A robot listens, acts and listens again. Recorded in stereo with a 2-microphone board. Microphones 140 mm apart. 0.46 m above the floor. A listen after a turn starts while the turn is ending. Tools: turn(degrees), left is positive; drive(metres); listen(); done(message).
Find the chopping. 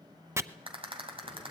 turn(degrees=-20)
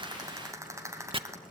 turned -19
turn(degrees=-140)
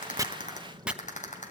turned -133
done("Found it: chopping, straight ahead.")